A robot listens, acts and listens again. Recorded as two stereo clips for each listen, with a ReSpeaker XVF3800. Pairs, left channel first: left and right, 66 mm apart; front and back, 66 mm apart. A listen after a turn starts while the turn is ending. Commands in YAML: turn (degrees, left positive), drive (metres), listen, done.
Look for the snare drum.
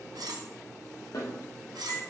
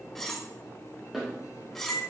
turn: 90
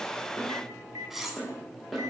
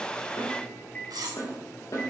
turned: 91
done: "Found it: a snare drum, straight ahead."